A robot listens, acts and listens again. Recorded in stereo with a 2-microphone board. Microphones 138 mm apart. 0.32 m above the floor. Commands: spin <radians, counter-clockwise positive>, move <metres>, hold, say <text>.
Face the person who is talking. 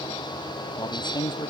spin 0.52
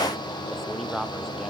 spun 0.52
say Facing the man speaking.